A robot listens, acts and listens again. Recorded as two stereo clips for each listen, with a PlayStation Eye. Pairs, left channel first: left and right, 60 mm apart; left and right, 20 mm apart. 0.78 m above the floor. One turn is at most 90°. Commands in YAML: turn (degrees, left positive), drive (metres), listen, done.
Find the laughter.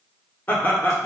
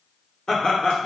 turn: 35
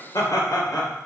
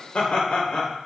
turn: 90
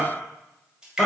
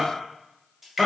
done: "Facing the laughter."